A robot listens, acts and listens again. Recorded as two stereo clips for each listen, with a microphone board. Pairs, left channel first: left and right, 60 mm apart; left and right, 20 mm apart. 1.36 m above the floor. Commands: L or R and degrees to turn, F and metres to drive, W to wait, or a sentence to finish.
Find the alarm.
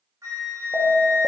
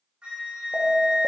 L45
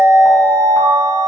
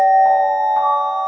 L10
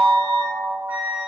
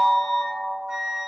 Found it: an alarm, straight ahead.